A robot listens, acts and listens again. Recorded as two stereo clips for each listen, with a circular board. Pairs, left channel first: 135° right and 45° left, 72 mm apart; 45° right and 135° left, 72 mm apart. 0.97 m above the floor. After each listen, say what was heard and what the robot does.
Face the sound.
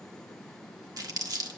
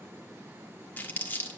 The crumpling: 20° left. Turn 20° left.
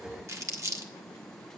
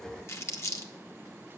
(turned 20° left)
Facing the crumpling.